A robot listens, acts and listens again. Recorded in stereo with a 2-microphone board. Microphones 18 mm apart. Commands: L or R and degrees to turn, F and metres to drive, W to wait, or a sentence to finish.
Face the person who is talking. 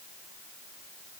W
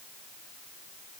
W
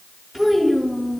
R30
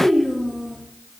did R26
R150
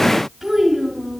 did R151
R10
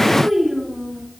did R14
Found it: a child speaking, straight ahead, over 4 m away.